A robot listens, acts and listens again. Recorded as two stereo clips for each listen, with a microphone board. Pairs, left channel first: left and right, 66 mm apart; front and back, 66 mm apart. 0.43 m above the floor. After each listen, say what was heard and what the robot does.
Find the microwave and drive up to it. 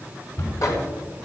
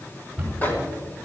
The microwave: 60° left. Turn 60° left.
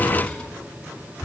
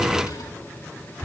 Keep listening.
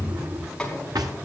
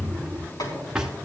The microwave is now 15° left. Turn 15° left.
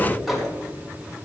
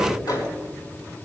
Drive 1.0 m forward.
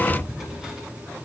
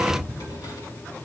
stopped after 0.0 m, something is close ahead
Keep listening.
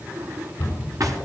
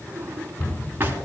Keep listening.
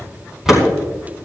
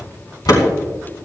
Something is in my way. I am facing the microwave but have not reached it.